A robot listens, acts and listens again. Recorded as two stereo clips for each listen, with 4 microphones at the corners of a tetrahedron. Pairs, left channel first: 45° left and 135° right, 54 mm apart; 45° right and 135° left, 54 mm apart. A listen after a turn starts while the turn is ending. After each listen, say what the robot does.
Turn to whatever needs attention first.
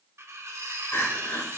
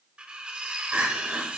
Turn 80° left.
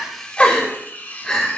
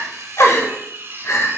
Turn 25° right.
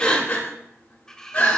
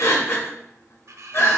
Found it: crying, straight ahead, 1 to 2 m away.